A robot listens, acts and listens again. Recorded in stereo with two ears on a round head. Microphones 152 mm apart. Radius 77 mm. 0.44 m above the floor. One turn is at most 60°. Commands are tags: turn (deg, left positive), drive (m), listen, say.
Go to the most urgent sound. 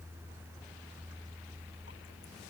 <listen/>
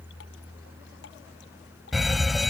<turn deg="30"/>
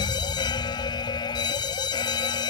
<turn deg="60"/>
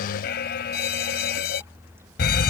<turn deg="60"/>
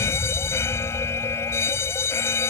<turn deg="20"/>
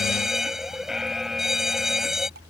<drive m="1.0"/>
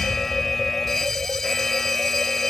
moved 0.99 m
<drive m="1.0"/>
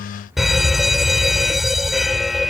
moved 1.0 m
<drive m="1.0"/>
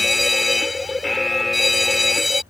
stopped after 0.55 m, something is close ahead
<say>Arrived at the fire alarm, straight ahead.</say>